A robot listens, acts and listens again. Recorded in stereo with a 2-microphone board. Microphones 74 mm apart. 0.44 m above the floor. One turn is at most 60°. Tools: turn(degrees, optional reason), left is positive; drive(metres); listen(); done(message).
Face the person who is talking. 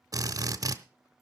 listen()
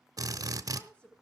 turn(degrees=20, reason="The woman speaking: about 20° left or 160° left.")
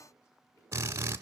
listen()
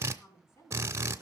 turn(degrees=60, reason="So it is at 140° left.")
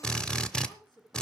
turn(degrees=60, reason="The woman speaking is now 85° left.")
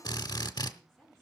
done("Found it: a woman speaking, straight ahead.")